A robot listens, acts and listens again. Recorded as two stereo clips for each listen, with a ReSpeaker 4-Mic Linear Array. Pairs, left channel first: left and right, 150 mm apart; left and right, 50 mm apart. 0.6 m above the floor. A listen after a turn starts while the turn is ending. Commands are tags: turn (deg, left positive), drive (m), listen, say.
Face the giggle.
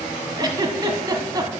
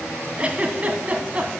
<turn deg="-30"/>
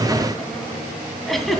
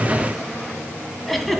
<say>Found it: a giggle, straight ahead, 1 to 2 m away.</say>